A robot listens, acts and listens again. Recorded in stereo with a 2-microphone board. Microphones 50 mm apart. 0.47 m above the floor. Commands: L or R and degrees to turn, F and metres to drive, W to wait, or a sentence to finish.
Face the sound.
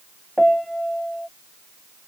L30
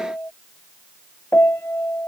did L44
L130
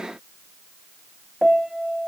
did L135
Facing the piano.